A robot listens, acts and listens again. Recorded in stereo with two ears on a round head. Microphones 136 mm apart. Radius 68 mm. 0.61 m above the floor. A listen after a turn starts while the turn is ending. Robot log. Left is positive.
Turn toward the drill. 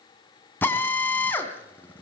cmd yaw +30
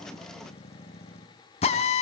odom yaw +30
note: So it is at 135° left.
cmd yaw +135
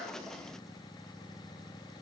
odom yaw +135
cmd idle
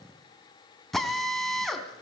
end: Found it: a drill, straight ahead, 2 to 4 m away.